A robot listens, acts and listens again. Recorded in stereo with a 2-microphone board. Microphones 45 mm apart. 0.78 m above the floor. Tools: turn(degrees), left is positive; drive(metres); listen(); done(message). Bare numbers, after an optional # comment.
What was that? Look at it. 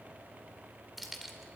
turn(30)
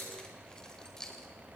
# So it is at 165° left.
turn(165)
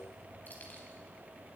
listen()
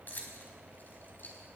# The keys jangling is now 40° left.
turn(40)
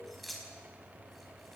done("Facing the keys jangling, over 4 m away.")